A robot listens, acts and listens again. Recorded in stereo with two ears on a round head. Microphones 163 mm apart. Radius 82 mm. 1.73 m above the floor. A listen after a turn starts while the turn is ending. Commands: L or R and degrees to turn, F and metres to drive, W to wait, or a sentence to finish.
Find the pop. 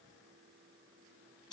W
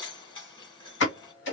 L65
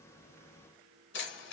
W
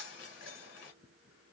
I heard a pop, but can't make it out now. It was about straight ahead or 50° left.